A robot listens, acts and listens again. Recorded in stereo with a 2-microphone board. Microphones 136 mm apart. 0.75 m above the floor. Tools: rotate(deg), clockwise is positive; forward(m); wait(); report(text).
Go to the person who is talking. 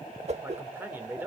rotate(30)
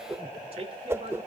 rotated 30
rotate(135)
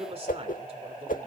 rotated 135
rotate(45)
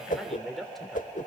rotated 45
forward(1.0)
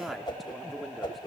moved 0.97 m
forward(1.0)
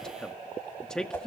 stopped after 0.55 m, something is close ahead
report("Arrived at the man speaking, straight ahead.")